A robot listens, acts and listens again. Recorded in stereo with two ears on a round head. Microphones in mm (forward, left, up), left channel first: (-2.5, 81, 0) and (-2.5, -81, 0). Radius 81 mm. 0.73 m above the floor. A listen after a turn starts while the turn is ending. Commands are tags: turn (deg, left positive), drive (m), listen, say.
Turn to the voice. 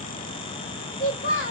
<turn deg="50"/>
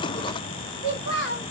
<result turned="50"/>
<turn deg="75"/>
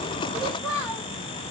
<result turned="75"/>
<turn deg="15"/>
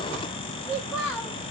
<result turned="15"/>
<say>Found it: a child speaking, straight ahead.</say>